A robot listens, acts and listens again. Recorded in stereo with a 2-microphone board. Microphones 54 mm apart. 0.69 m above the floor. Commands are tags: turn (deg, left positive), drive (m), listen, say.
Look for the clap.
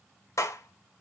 <turn deg="55"/>
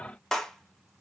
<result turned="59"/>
<turn deg="10"/>
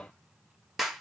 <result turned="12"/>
<say>Found it: a clap, straight ahead.</say>